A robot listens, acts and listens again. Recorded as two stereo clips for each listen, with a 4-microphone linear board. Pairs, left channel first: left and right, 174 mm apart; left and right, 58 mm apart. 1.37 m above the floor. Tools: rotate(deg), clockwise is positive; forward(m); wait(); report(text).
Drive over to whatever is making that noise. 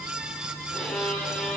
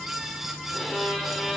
rotate(-30)
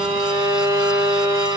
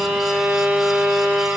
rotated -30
rotate(25)
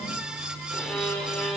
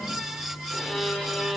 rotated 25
forward(1.0)
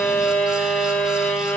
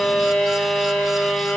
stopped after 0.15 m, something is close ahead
report("Something is in my way. I am facing the violin but have not reached it.")